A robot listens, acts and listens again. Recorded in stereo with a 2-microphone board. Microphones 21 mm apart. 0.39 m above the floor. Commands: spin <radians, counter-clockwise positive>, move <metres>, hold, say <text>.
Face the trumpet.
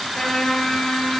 spin 1.05
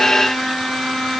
spin 0.96
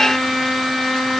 say Found it: a trumpet, straight ahead, over 4 m away.